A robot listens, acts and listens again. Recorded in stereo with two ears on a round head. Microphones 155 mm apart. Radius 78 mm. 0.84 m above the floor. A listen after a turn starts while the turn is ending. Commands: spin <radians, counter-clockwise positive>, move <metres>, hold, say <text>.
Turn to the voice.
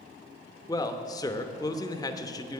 spin 0.35
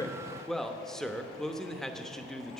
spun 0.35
say Facing the man speaking, under 1 m away.